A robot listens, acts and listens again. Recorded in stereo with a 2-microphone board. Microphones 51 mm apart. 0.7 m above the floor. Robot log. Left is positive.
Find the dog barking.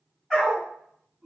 cmd yaw -30
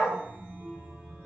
note: So it is at 145° right.
cmd yaw -145
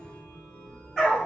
end: Found it: a dog barking, straight ahead.